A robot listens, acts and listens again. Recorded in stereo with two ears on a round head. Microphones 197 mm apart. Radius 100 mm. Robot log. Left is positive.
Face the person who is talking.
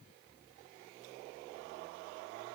cmd idle
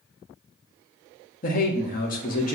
note: The man speaking: about 40° left or 140° left.
cmd yaw +40
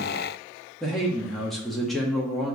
end: Facing the man speaking, 1 to 2 m away.